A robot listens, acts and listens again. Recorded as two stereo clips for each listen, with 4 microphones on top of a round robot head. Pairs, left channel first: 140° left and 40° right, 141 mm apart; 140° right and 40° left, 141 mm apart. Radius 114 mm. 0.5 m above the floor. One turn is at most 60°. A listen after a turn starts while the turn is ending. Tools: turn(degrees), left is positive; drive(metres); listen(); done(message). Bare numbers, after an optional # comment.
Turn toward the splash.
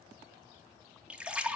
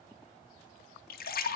# The splash: 125° right.
turn(-60)
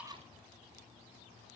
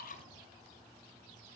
# Nothing new. It was at 65° right.
turn(-60)
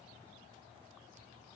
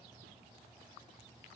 done("Facing where the splash came from. I can't hear it now.")